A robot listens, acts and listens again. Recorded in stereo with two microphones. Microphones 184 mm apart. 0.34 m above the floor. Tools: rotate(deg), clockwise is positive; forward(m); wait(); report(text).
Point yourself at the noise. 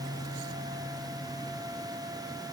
wait()
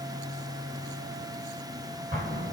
rotate(40)
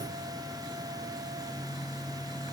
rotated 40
wait()
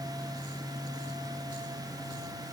report("I heard an explosion, but can't make it out now. It was about straight ahead or 100° right.")